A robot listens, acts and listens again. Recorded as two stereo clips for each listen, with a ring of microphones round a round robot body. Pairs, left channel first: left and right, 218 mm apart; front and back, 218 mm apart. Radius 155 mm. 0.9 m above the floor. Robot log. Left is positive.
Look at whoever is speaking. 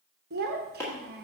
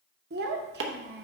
note: The child speaking: 135° right.
cmd yaw -135
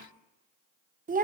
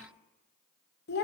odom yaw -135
note: The child speaking is now 40° right.
cmd yaw -40
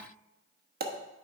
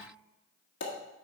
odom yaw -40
cmd idle
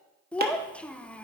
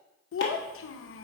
end: Facing the child speaking, under 1 m away.